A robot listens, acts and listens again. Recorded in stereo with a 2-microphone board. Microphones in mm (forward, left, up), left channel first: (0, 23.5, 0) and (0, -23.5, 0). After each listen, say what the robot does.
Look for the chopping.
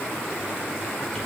Keep listening.
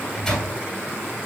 Keep listening.
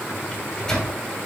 I can't make out chopping, only a microwave.